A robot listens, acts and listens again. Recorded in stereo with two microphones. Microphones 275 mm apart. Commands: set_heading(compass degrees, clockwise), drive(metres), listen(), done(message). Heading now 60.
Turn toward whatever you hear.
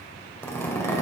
set_heading(30)
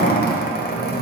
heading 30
set_heading(250)
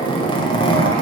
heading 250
set_heading(230)
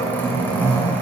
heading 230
set_heading(220)
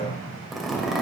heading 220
done("Found it: a zipper, straight ahead.")